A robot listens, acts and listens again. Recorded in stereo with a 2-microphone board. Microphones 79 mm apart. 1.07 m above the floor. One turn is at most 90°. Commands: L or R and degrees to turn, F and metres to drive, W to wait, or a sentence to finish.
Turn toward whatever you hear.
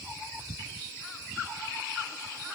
W
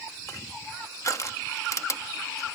L45
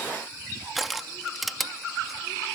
Found it: crushing, straight ahead.